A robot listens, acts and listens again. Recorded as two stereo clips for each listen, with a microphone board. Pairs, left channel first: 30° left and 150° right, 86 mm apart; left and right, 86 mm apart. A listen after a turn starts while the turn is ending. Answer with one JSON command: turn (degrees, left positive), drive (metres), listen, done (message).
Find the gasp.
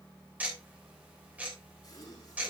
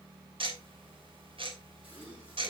{"turn": -15}
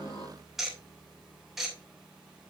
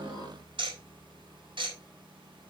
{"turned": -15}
{"done": "I heard a gasp from this way, but can't make it out now."}